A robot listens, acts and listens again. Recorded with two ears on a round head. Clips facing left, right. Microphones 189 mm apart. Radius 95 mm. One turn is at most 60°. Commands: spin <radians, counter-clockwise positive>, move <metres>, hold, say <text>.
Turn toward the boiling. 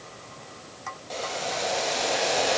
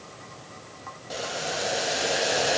spin -0.52
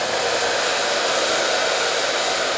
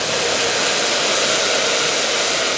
spin -1.05
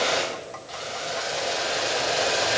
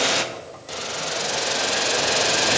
spin -1.05
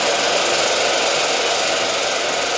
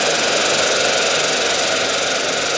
spin -0.35
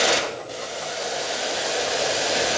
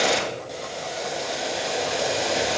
say Facing the boiling.